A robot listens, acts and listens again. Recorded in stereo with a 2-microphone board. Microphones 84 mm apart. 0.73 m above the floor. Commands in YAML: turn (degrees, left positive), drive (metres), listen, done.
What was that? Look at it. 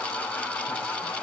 listen: true
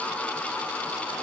listen: true
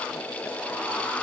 done: "I can't make out anything."